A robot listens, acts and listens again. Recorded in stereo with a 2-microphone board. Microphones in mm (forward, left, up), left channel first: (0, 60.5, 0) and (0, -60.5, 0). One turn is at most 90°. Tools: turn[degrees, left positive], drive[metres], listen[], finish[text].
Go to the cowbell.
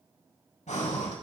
Action: listen[]
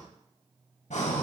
Action: listen[]
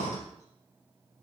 Action: finish[I can't make out a cowbell, only breathing.]